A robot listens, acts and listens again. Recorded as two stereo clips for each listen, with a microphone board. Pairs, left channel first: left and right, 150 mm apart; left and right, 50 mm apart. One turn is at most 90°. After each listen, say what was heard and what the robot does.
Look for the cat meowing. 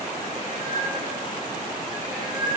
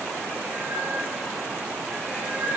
The cat meowing: about 30° right or 150° right. Turn 30° right.
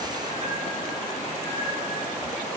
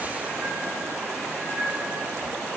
So it is at 135° right. Turn 90° right.
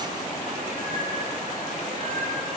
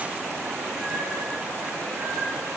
Nothing new. It was at 45° right. Turn 45° right.
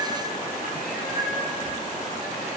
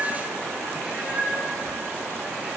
The cat meowing is now 30° right. Turn 30° right.
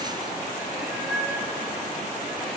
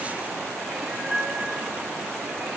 Found it: a cat meowing, straight ahead.